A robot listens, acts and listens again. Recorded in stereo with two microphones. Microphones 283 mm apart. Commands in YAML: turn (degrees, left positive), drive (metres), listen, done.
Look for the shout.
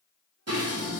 listen: true
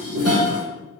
listen: true
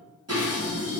done: "I can't make out a shout, only dishes clattering."